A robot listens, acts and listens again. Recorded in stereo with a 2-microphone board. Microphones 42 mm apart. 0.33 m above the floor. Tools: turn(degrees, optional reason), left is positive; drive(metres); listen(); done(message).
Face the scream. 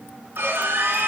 turn(degrees=-70, reason="The scream: about 70° right or 110° right.")
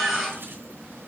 done("Found it: a scream, straight ahead, over 4 m away.")